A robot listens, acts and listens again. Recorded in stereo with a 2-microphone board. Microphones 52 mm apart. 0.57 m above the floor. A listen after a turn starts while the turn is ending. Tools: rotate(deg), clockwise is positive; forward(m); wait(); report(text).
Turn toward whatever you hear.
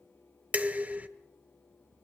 rotate(30)
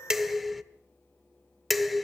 report("Found it: dishes clattering, straight ahead, under 1 m away.")